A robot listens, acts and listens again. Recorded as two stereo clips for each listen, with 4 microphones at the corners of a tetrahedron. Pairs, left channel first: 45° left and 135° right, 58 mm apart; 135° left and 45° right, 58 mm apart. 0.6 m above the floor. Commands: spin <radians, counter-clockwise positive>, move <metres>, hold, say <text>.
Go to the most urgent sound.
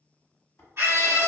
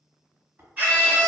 spin -1.75
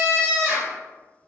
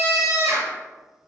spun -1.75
spin -0.35
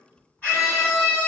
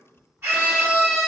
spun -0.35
spin -0.17
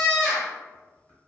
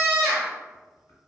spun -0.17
move 1.0
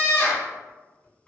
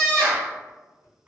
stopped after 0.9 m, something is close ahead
spin 0.26
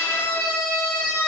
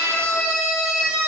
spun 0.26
say I am next to the scream.